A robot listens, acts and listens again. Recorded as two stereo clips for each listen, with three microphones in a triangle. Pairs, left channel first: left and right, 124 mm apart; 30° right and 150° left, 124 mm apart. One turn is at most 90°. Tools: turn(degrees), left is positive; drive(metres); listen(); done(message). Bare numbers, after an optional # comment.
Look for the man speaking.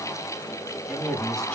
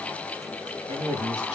# The man speaking: straight behind.
turn(90)
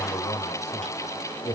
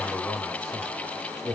# The man speaking is now 55° left.
turn(55)
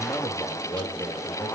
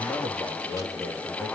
# The man speaking is now 20° left.
turn(20)
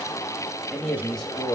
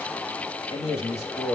done("Facing the man speaking.")